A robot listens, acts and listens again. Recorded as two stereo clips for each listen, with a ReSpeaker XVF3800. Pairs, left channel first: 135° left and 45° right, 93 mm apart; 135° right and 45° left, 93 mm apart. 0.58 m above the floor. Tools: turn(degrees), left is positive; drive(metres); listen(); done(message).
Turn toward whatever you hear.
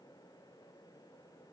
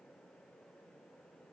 listen()
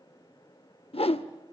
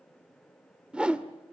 turn(degrees=125)
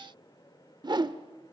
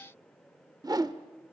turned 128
done("Facing the whoosh.")